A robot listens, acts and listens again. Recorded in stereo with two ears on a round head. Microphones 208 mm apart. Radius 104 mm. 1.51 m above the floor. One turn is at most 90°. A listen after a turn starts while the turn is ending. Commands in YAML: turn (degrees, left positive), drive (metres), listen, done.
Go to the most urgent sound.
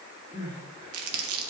turn: -20
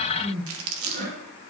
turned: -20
turn: -90
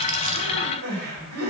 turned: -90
turn: -80
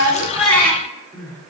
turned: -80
drive: 1.0
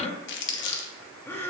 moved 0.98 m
turn: 15
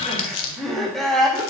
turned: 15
drive: 1.0
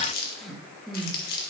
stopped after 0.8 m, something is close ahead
done: "I am next to the crying."